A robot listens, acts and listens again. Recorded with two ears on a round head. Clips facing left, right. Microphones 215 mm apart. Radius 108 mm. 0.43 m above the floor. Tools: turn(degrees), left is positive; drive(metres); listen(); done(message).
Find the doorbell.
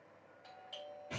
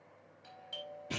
turn(degrees=-30)
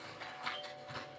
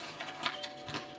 listen()
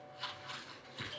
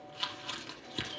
listen()
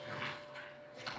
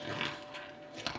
done("I heard a doorbell, but can't make it out now. It was about 15° left or 135° right.")